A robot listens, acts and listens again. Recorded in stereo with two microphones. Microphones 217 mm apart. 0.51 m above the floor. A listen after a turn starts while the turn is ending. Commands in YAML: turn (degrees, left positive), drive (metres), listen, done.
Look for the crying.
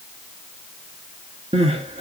turn: -30
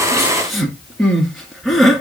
done: "Found it: crying, straight ahead, 1 to 2 m away."